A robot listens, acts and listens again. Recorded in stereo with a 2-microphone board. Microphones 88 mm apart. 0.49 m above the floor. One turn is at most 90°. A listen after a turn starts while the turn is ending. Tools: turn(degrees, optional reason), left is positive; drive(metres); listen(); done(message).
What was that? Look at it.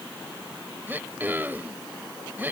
turn(degrees=-25, reason="The throat clearing: about 25° right or 155° right.")
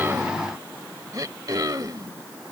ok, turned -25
turn(degrees=-90, reason="So it is at 130° right.")
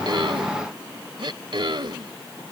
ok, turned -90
turn(degrees=-75, reason="The throat clearing is now 75° right.")
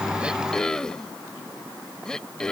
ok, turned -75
turn(degrees=10, reason="The throat clearing is now 10° left.")
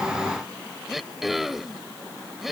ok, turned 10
done("Facing the throat clearing.")